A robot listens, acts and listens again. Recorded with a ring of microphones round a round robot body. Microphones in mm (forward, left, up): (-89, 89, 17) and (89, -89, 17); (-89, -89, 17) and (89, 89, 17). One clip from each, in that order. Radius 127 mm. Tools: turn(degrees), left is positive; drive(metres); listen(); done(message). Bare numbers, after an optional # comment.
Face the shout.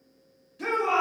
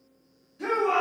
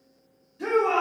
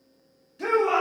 # The shout: 75° left.
turn(75)
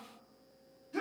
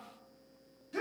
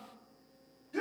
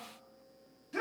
# The shout is now 15° left.
turn(15)
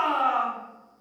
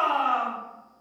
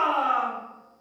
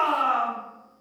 done("Found it: a shout, straight ahead, under 1 m away.")